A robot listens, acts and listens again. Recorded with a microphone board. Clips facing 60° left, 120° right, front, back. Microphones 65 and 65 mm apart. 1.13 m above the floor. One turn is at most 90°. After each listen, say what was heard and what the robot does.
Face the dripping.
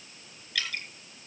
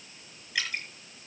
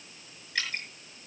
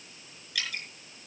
The dripping: 50° right. Turn 50° right.
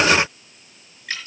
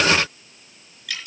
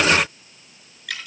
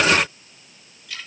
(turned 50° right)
The dripping is now 10° left. Turn 10° left.
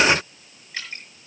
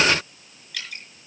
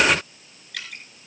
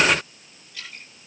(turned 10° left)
Found it: dripping, straight ahead.